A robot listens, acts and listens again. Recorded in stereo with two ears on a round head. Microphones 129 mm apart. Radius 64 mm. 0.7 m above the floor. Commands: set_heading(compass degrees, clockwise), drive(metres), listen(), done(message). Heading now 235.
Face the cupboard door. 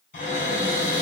set_heading(180)
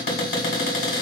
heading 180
set_heading(115)
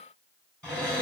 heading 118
done("Found it: a cupboard door, straight ahead, 1 to 2 m away.")